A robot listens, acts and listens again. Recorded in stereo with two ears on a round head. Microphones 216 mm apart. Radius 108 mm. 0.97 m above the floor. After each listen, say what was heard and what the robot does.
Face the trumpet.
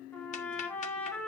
Turn 30° left.
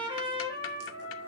So it is at 25° right. Turn 25° right.
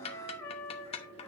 The trumpet is now 15° left. Turn 15° left.
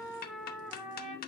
Facing the trumpet.